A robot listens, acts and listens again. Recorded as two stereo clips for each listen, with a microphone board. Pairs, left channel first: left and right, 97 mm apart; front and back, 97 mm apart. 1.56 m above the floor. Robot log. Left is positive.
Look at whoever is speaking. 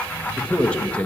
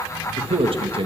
note: The man speaking: 170° left.
cmd yaw +170
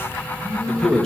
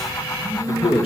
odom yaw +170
end: Found it: a man speaking, straight ahead, 1 to 2 m away.